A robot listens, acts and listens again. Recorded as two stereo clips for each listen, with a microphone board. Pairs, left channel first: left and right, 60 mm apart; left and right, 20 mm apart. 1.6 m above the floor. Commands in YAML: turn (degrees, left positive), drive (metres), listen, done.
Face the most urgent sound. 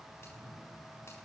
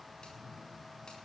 listen: true
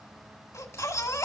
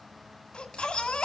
turn: 65
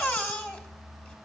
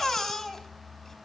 turn: 35
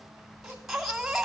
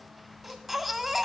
done: "Facing the baby crying, 1 to 2 m away."